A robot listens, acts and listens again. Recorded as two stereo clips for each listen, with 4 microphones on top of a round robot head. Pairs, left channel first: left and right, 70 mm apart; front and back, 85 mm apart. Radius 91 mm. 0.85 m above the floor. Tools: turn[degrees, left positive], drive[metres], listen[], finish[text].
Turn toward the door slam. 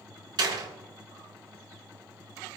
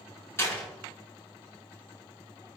Thought: The door slam: 65° right.
Action: turn[-65]
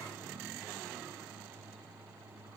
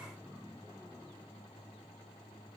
Action: finish[I heard a door slam from this way, but can't make it out now.]